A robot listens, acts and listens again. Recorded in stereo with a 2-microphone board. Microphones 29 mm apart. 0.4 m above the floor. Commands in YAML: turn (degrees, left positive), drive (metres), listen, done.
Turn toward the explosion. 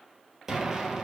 turn: -15
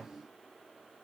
done: "Found it: an explosion, straight ahead."